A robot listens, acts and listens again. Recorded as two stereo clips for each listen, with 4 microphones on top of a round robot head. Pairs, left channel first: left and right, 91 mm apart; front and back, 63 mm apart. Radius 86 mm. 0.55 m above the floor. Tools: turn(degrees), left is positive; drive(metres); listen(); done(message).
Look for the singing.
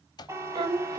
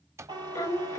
turn(degrees=-45)
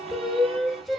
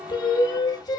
done("Facing the singing, 1 to 2 m away.")